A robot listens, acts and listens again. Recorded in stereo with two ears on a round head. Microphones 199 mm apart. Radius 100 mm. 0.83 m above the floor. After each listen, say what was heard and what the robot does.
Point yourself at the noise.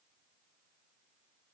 Keep listening.
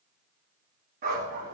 The dog barking: about 40° right or 140° right. Turn 40° right.
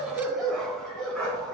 Found it: a dog barking, straight ahead.